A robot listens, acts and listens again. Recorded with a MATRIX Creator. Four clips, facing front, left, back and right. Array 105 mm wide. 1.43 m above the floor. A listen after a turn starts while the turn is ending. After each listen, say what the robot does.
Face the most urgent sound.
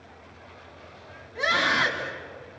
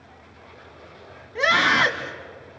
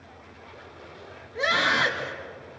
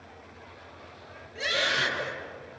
Turn 90° left.
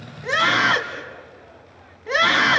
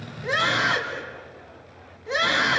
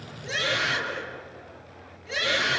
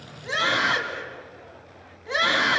Found it: a scream, straight ahead.